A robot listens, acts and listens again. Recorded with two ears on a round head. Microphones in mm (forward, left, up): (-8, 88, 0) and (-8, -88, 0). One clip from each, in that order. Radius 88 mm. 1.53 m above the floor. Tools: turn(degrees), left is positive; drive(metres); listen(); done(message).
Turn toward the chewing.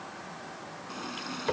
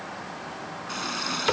listen()
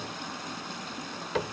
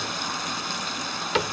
listen()
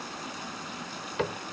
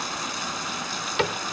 done("I can't make out chewing to turn to.")